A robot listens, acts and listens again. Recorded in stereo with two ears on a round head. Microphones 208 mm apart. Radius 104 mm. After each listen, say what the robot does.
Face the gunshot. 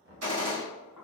Turn 65° right.
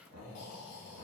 Keep listening.
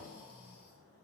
I heard a gunshot, but can't make it out now. It was about straight ahead or 50° right.